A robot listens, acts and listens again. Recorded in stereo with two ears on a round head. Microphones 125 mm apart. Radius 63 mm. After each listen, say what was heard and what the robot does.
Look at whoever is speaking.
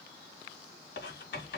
Keep listening.
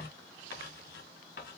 Keep listening.
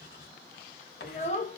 The child speaking: about 55° left or 125° left. Turn 55° left.
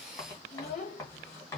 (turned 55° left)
So it is at 60° left. Turn 60° left.
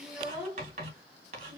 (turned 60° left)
The child speaking is now 15° right. Turn 15° right.
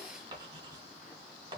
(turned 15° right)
Keep listening.
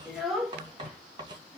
Found it: a child speaking, straight ahead, 1 to 2 m away.